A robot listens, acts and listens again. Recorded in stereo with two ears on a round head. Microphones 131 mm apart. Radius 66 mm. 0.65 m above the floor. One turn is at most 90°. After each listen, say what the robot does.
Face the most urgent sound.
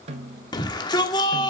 Turn 30° left.
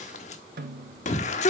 Turn 90° left.
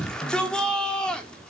Found it: a shout, straight ahead.